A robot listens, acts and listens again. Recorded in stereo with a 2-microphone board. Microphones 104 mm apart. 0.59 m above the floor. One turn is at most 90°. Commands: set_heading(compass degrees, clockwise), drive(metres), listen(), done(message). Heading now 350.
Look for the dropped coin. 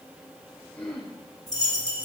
set_heading(310)
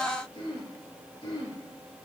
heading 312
listen()
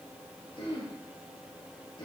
done("I heard a dropped coin, but can't make it out now. It was about 5° left or 100° left.")